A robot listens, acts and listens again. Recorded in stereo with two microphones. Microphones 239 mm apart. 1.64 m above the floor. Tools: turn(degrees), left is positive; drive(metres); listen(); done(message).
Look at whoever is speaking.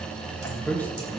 turn(degrees=30)
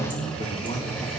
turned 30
turn(degrees=155)
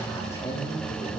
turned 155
turn(degrees=10)
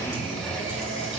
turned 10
listen()
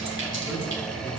listen()
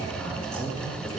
done("Facing the man speaking.")